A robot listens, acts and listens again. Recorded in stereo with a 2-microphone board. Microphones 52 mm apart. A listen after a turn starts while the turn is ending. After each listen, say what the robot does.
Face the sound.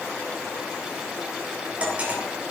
Turn 25° right.
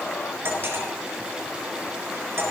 Turn 130° right.
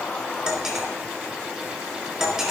Turn 10° right.
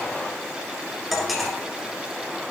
Found it: cutlery clinking, straight ahead.